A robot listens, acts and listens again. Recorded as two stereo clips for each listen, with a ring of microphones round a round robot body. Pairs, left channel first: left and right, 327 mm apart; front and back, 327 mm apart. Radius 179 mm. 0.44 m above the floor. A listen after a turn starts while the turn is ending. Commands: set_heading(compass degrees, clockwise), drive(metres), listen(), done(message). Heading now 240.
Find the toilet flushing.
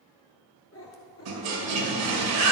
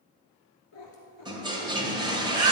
set_heading(345)
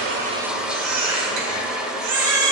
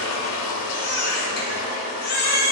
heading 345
done("Facing the toilet flushing, 1 to 2 m away.")